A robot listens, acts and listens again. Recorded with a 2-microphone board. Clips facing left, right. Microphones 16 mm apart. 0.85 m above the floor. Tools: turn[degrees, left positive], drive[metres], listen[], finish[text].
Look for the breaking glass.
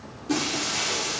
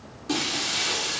Thought: The breaking glass: about 30° right or 150° right.
Action: turn[-30]
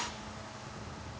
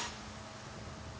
Action: listen[]
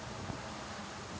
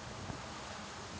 Action: finish[I heard breaking glass, but can't make it out now. It was about straight ahead or 120° right.]